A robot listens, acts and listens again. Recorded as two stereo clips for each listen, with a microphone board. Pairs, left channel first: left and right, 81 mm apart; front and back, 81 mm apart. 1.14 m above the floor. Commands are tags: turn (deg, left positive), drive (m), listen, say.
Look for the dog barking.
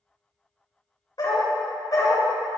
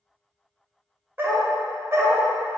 <turn deg="130"/>
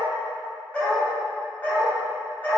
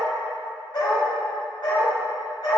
<turn deg="20"/>
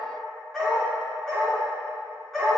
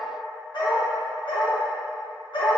<say>Facing the dog barking.</say>